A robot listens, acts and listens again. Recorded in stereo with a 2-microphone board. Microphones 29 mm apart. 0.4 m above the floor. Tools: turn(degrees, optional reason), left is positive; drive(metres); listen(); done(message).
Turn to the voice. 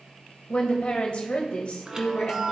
turn(degrees=45, reason="The woman speaking: about 45° left or 135° left.")
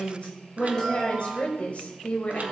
turn(degrees=80, reason="So it is at 80° left.")
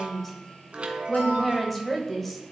turn(degrees=10, reason="The woman speaking is now 10° left.")
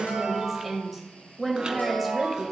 done("Facing the woman speaking.")